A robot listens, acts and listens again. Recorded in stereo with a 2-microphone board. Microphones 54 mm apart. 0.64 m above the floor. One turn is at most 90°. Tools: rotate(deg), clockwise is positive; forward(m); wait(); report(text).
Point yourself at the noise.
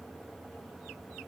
wait()
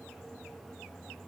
wait()
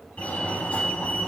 rotate(-25)
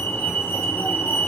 rotate(-90)
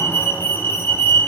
rotate(-45)
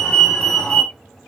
rotate(-15)
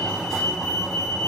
report("Facing the fire alarm, 2 to 4 m away.")